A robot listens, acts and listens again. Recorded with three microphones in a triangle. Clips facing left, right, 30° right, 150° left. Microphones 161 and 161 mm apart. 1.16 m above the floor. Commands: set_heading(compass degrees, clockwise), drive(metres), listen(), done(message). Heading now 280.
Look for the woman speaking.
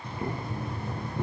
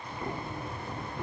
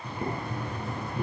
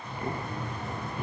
listen()
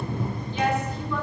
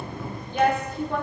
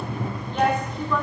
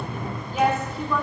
set_heading(45)
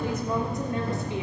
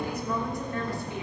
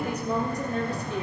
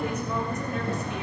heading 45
set_heading(25)
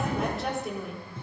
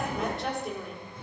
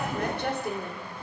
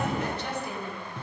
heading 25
done("Found it: a woman speaking, straight ahead, 2 to 4 m away.")